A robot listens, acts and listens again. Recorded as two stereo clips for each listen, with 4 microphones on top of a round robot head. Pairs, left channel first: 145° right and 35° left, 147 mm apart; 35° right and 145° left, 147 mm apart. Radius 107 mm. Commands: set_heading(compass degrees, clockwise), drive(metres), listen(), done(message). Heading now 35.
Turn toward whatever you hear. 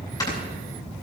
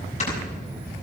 set_heading(115)
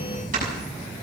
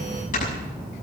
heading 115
done("Facing the snoring, over 4 m away.")